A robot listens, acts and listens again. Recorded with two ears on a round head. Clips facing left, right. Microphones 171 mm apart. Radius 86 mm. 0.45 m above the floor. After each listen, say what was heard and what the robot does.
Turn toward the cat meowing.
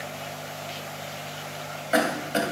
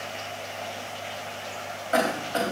Keep listening.
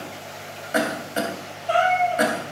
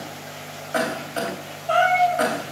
Turn 30° left.
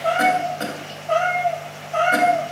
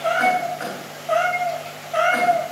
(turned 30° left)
So it is at 10° right. Turn 10° right.
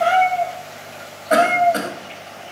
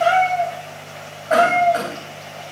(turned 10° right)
Facing the cat meowing, over 4 m away.